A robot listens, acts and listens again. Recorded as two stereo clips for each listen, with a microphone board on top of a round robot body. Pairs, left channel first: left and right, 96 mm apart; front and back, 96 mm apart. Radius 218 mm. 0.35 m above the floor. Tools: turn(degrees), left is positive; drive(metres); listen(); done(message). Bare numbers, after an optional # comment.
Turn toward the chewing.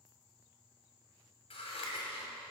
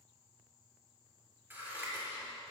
listen()
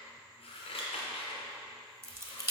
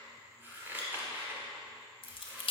# The chewing: 25° right.
turn(-25)
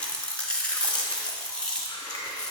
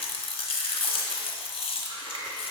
# The chewing is now 10° left.
turn(10)
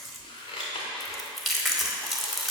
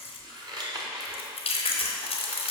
done("Found it: chewing, straight ahead.")